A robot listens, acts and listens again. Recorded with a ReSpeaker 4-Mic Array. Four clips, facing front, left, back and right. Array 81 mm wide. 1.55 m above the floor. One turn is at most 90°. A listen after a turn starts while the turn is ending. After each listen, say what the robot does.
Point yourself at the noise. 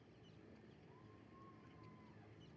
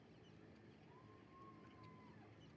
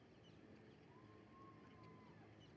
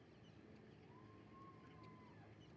Keep listening.
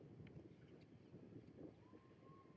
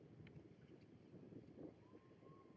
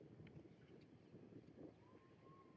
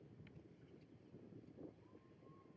Keep listening.
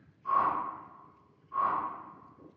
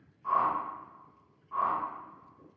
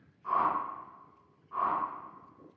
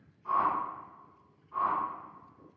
Turn 90° left.
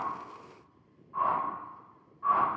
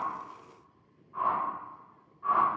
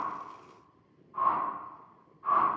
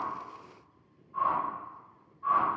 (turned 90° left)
Turn 15° left.
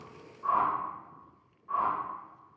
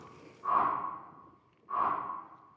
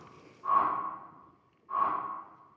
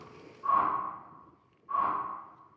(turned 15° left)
Facing the whoosh, 1 to 2 m away.